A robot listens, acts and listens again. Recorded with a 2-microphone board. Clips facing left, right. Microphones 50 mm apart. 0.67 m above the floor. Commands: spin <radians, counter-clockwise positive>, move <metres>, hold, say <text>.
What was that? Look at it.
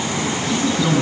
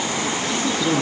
spin 0.96
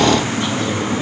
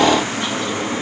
hold
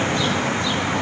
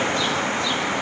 hold
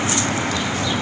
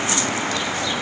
say I heard a man speaking, but can't make it out now. It was about straight ahead or 70° left.